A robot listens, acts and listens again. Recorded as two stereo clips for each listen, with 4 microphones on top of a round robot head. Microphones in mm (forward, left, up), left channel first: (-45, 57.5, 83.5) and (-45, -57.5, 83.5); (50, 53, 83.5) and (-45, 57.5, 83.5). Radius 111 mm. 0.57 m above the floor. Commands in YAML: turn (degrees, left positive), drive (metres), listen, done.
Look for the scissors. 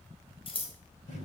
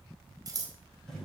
turn: 125
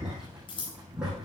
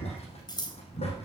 turn: 40
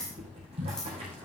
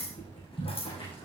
done: "Found it: scissors, straight ahead."